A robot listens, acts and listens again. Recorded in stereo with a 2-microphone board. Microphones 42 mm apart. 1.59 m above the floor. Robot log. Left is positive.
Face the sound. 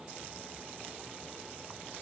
cmd idle
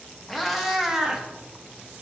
note: The cat meowing: about 15° right or 165° right.
cmd yaw -15
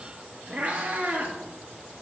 note: The cat meowing: about 40° right or 140° right.
cmd yaw -40
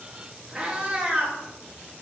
note: So it is at 15° right.
cmd yaw -15
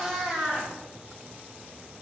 end: Facing the cat meowing.